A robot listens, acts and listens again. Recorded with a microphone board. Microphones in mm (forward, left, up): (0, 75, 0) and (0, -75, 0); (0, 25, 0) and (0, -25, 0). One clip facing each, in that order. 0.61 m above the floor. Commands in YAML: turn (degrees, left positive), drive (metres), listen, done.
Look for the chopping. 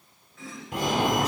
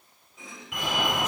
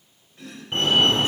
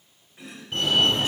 turn: -15
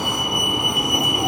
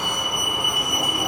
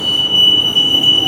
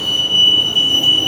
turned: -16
listen: true
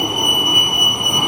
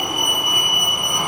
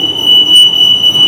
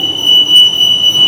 listen: true
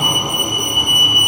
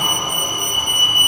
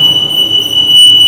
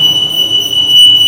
done: "I heard chopping, but can't make it out now. It was about straight ahead or 150° right."